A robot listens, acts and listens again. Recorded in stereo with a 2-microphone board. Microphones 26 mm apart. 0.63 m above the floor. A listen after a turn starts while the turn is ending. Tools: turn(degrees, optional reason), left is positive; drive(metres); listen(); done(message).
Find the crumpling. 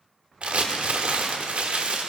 turn(degrees=-50, reason="The crumpling: about 50° right or 130° right.")
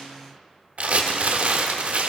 turn(degrees=-70, reason="So it is at 70° right.")
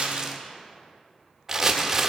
turn(degrees=-25, reason="The crumpling is now 25° right.")
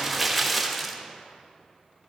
done("Facing the crumpling, 1 to 2 m away.")